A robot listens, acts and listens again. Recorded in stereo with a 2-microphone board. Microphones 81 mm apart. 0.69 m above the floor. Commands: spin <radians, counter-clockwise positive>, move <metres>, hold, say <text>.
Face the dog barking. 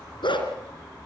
spin 1.22
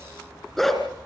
say Found it: a dog barking, straight ahead, 2 to 4 m away.